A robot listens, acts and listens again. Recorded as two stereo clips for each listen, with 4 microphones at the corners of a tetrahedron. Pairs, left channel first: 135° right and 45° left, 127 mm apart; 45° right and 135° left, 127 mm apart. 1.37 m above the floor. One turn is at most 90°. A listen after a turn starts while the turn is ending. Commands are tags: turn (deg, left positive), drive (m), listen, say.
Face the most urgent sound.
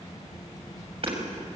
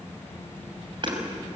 <listen/>
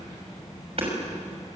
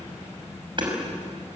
<listen/>
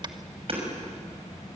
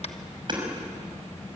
<say>I can't make out anything urgent, only hammering.</say>